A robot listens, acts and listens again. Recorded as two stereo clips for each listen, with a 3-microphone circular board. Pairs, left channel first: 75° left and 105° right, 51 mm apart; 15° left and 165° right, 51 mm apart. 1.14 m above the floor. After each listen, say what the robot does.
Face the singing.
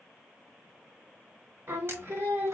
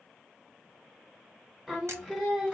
Turn 85° right.
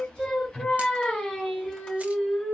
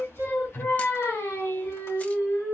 Facing the singing, 2 to 4 m away.